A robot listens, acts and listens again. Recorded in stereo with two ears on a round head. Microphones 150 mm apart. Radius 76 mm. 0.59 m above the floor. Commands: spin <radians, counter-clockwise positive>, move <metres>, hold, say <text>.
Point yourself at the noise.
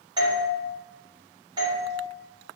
spin -0.44
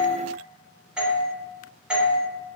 say Facing the doorbell, 2 to 4 m away.